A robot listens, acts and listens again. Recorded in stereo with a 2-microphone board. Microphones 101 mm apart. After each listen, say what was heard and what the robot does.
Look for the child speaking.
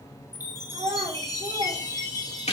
The child speaking: about 70° right or 110° right. Turn 70° right.
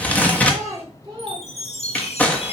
So it is at 40° right. Turn 40° right.
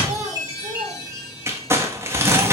The child speaking is now 35° right. Turn 35° right.
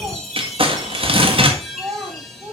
The child speaking is now 20° right. Turn 20° right.
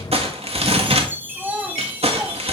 The child speaking is now 10° right. Turn 10° right.
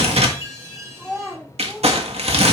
Found it: a child speaking, straight ahead, 1 to 2 m away.